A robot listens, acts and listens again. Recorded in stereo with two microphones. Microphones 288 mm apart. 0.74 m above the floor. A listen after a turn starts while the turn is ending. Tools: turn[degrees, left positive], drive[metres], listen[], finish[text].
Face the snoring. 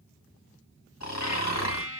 Thought: The snoring: about 60° left or 120° left.
Action: turn[60]
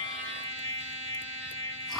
Action: listen[]
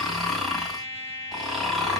Action: finish[Found it: snoring, straight ahead, 1 to 2 m away.]